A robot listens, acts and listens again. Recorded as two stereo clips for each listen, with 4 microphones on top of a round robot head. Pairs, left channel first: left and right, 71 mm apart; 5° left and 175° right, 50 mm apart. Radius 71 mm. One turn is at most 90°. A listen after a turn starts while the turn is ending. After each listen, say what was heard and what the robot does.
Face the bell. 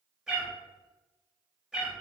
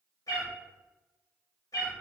Keep listening.
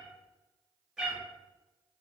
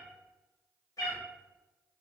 Keep listening.
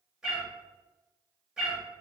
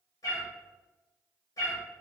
I can't make out a bell to turn to.